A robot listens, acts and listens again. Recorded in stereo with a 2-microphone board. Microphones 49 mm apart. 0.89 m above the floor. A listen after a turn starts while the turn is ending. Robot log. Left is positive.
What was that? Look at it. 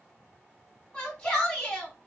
note: The shout: about 20° left or 160° left.
cmd yaw +20
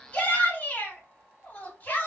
note: So it is at 140° left.
cmd yaw +140
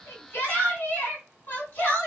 note: The shout is now 45° left.
cmd yaw +45
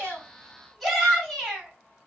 end: Found it: a shout, straight ahead, 2 to 4 m away.